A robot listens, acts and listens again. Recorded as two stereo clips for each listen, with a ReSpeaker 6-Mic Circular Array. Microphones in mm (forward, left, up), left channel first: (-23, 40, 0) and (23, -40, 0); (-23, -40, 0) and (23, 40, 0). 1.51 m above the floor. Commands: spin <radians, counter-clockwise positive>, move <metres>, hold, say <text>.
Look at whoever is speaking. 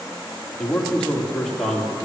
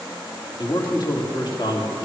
spin -2.71
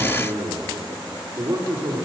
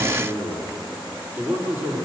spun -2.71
say Found it: a man speaking, straight ahead, 2 to 4 m away.